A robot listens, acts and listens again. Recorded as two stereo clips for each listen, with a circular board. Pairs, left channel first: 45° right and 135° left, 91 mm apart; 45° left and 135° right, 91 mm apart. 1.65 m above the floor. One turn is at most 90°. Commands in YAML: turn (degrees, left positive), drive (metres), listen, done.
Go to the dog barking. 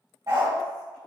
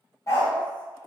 turn: 90
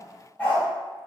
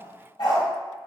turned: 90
turn: 30
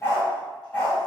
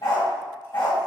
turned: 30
turn: 25
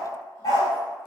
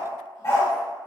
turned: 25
drive: 1.0
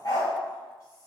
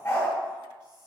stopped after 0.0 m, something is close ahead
done: "Blocked. The dog barking is further on, straight ahead."